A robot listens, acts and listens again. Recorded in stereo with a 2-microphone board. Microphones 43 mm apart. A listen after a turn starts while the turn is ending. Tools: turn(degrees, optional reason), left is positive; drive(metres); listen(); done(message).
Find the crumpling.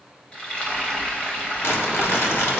turn(degrees=70, reason="The crumpling: about 70° left or 110° left.")
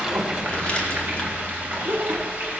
turn(degrees=25, reason="So it is at 25° left.")
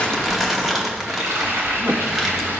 done("Found it: crumpling, straight ahead.")